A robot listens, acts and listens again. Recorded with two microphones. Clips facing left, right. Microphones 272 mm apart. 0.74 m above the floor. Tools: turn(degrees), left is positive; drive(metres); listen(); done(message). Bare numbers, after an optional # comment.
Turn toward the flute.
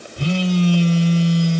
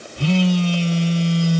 listen()
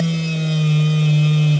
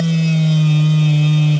listen()
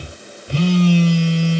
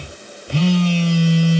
done("I can't make out a flute, only a phone buzzing.")